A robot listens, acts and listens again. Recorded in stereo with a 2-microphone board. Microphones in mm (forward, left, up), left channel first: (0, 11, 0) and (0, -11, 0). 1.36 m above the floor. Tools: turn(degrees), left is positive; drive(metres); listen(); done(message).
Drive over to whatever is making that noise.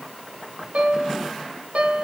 turn(degrees=-75)
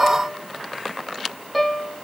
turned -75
drive(metres=1.0)
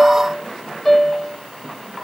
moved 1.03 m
drive(metres=1.0)
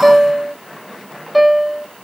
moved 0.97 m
drive(metres=1.0)
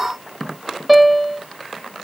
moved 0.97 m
drive(metres=1.0)
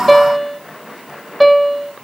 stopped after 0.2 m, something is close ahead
done("Arrived at the piano, straight ahead.")